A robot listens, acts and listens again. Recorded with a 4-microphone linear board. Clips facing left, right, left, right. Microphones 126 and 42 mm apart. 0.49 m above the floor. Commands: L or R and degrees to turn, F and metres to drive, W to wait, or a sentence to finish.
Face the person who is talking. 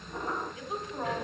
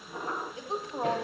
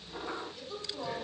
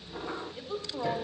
R30
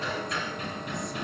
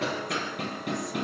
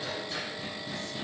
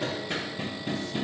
W
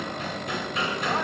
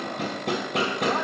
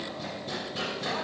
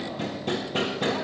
W
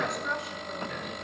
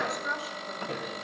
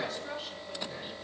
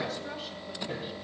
Found it: a woman speaking, straight ahead.